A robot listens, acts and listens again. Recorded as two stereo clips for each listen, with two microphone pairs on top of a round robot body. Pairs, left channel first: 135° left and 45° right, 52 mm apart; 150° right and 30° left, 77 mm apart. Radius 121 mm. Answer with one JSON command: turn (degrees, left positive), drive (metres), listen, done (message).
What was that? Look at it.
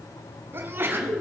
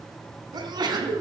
{"done": "Facing the sneeze."}